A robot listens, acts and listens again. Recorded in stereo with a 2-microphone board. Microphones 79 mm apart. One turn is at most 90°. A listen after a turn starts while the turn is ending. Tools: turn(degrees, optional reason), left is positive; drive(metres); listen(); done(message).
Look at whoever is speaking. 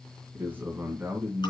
turn(degrees=-25, reason="The man speaking: about 25° right or 155° right.")
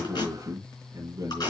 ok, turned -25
turn(degrees=-90, reason="So it is at 130° right.")
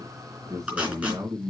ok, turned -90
turn(degrees=-50, reason="The man speaking is now 50° right.")
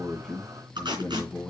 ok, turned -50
turn(degrees=20, reason="The man speaking is now 20° left.")
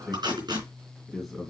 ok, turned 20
done("Facing the man speaking.")